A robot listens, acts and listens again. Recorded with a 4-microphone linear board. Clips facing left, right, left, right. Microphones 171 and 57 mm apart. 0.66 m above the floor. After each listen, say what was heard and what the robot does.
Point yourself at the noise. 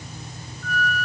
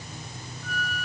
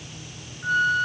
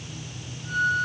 The flute: about 65° left or 115° left. Turn 65° left.
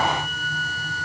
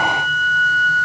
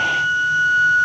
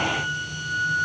So it is at 40° left. Turn 40° left.
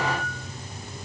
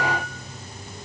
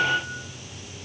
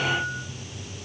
The flute is now 15° left. Turn 15° left.
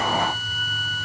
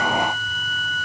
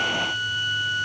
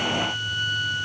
Found it: a flute, straight ahead.